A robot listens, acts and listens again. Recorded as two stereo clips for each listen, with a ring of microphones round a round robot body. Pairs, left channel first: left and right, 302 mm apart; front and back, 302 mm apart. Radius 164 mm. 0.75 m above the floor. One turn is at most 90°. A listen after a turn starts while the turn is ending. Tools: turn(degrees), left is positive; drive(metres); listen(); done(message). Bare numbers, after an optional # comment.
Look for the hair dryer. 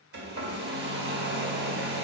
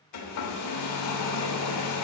# The hair dryer: 30° right.
turn(-30)
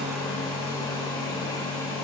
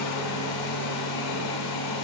# The hair dryer is now 10° left.
turn(10)
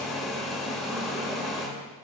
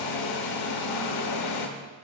done("Facing the hair dryer, under 1 m away.")